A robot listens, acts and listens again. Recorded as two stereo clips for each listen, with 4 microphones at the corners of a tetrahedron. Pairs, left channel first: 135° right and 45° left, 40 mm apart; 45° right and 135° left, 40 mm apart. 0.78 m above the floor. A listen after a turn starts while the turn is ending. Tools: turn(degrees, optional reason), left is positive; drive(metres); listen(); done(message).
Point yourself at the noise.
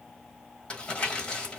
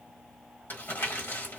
turn(degrees=-70, reason="The crumpling: 70° right.")
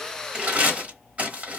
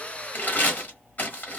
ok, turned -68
done("Facing the crumpling.")